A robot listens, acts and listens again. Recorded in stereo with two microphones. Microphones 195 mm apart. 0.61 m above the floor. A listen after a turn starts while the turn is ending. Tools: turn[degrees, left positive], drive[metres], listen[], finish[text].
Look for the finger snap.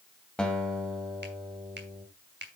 Thought: The finger snap: about 60° right or 120° right.
Action: turn[-60]
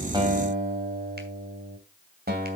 Action: listen[]
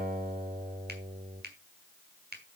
Thought: So it is at 60° right.
Action: turn[-60]
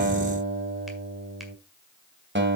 Action: listen[]
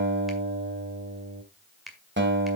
Action: finish[Found it: a finger snap, straight ahead.]